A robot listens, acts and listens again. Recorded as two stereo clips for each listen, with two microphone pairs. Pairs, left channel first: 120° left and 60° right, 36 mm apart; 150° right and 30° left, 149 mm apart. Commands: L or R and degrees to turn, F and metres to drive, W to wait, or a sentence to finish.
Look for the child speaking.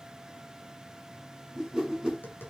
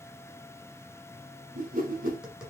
W
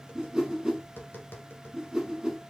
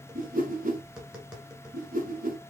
W
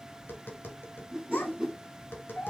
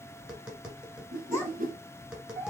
L130
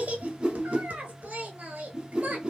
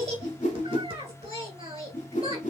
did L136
R15
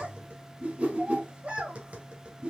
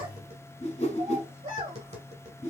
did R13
Found it: a child speaking, straight ahead.